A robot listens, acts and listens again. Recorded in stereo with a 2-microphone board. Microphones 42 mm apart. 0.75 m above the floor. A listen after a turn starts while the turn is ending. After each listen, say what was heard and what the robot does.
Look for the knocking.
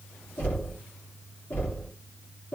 The knocking: about 45° left or 135° left. Turn 45° left.
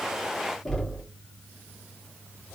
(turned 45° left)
Found it: knocking, straight ahead.